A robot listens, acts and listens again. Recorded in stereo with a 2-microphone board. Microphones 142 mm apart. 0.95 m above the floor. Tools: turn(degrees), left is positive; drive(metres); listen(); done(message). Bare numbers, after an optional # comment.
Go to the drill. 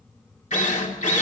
# The drill: about 60° left or 120° left.
turn(60)
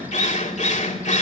# So it is at 55° left.
turn(55)
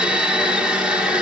drive(1.0)
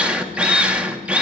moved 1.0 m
# The drill is now 10° right.
turn(-10)
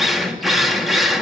drive(1.0)
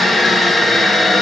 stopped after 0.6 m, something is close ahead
done("I am next to the drill.")